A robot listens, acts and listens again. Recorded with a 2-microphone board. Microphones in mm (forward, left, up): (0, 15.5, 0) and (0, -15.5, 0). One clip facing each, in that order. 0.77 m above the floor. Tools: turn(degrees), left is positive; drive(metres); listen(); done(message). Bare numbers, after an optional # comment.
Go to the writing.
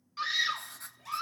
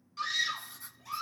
# The writing: about 65° left or 115° left.
turn(65)
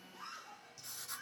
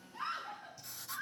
drive(1.0)
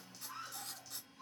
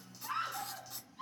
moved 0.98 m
drive(1.0)
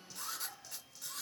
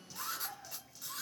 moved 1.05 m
drive(1.0)
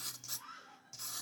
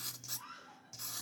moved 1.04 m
drive(1.0)
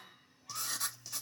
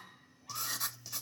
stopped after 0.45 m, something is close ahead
done("Arrived at the writing, straight ahead.")